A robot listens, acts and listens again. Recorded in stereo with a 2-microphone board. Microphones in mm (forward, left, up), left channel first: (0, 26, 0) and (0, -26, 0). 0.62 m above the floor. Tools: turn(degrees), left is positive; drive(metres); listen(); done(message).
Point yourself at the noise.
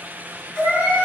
turn(degrees=25)
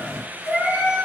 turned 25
turn(degrees=135)
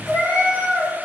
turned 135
turn(degrees=-15)
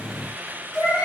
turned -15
done("Facing the cat meowing.")